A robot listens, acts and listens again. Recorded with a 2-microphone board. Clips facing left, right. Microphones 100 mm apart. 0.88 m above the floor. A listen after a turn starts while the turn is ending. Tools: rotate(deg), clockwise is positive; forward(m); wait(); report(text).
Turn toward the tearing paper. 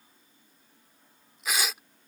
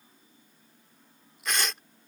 rotate(-30)
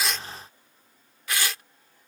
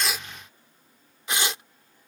rotate(25)
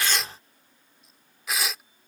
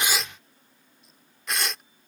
report("Found it: tearing paper, straight ahead.")